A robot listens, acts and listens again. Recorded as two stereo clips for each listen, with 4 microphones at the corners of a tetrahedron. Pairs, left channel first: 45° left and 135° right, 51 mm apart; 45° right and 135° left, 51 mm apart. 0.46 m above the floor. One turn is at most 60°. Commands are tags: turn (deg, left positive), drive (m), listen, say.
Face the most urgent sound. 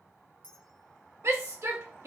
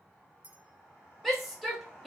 <turn deg="-60"/>
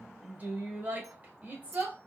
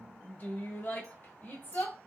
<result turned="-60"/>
<turn deg="-60"/>
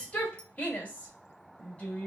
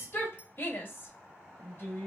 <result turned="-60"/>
<turn deg="-15"/>
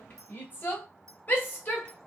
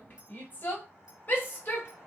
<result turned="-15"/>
<say>Found it: a shout, straight ahead.</say>